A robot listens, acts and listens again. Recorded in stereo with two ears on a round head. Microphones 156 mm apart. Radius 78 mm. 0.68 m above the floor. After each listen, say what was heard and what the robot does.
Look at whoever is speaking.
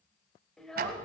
Turn 30° left.
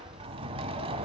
Keep listening.
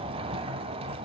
Keep listening.
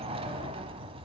I heard a child speaking, but can't make it out now. It was about 25° right or 145° left.